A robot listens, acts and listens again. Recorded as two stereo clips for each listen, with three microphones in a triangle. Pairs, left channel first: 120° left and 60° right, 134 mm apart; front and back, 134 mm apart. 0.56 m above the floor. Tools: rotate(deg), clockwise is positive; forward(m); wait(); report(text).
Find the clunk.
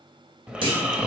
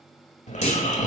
rotate(15)
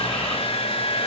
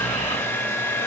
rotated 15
report("Facing where the clunk came from. I can't hear it now.")